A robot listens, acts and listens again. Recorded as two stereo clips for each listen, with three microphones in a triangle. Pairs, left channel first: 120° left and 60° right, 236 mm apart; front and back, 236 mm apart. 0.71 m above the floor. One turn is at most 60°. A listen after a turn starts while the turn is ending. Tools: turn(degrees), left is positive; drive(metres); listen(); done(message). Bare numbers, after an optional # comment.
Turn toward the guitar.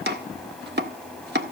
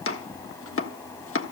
listen()
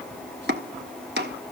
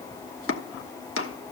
listen()
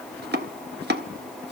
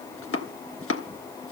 done("I can't make out a guitar, only chopping.")